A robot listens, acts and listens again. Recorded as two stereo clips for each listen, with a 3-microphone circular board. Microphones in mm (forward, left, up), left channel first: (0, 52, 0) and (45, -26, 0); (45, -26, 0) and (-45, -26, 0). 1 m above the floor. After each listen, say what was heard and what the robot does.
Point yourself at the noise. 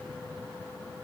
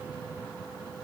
Keep listening.
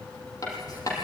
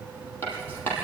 The writing: 70° left. Turn 70° left.
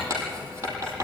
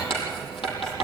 Found it: writing, straight ahead, over 4 m away.